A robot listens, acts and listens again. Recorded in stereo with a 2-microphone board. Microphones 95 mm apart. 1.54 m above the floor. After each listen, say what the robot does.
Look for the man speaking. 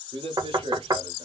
Turn 90° right.
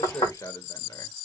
Turn 35° left.
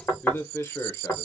Turn 30° left.
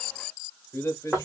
Turn 30° left.
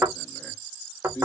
Turn 20° left.
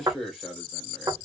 Found it: a man speaking, straight ahead.